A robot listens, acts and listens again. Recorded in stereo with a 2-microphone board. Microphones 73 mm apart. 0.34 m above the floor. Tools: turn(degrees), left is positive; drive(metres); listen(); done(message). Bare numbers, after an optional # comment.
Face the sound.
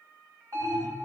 # The alarm: about 55° right or 125° right.
turn(-55)
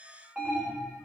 # So it is at 10° right.
turn(-10)
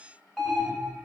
done("Facing the alarm.")